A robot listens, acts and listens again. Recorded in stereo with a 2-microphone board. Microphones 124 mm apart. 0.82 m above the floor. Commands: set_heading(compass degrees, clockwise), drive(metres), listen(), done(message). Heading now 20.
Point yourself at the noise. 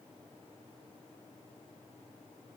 listen()
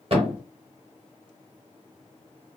set_heading(70)
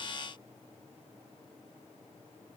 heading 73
listen()
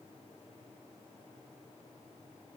done("I heard a thud, but can't make it out now. It was about 5° left or 75° right.")